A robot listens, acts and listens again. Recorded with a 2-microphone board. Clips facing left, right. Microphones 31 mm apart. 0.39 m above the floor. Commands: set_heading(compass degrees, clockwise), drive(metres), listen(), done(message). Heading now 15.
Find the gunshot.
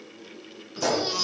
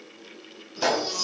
set_heading(55)
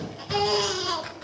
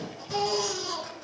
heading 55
listen()
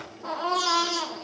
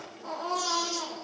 done("I heard a gunshot, but can't make it out now. It was about straight ahead or 100° right.")